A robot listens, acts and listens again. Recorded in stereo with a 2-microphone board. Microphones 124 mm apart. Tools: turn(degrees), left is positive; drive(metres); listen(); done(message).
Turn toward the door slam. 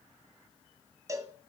listen()
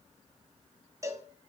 listen()
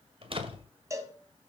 turn(degrees=-50)
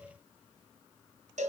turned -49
listen()
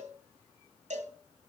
done("I heard a door slam, but can't make it out now. It was about straight ahead or 85° right.")